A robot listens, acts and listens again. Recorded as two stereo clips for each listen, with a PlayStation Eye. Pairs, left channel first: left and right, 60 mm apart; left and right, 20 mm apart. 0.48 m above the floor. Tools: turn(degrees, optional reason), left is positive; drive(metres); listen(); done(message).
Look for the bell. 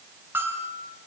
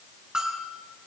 turn(degrees=-40, reason="The bell: about 40° right or 140° right.")
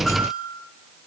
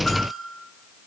done("Found it: a bell, straight ahead, over 4 m away.")